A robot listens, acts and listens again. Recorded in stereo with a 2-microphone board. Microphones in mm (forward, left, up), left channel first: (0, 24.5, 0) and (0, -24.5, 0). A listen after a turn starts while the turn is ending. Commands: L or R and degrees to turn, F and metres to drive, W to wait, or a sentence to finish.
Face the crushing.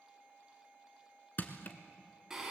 L45
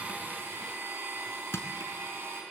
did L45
L90
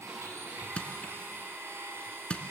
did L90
L25
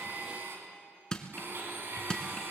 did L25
L15
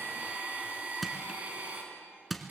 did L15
Facing the crushing, 1 to 2 m away.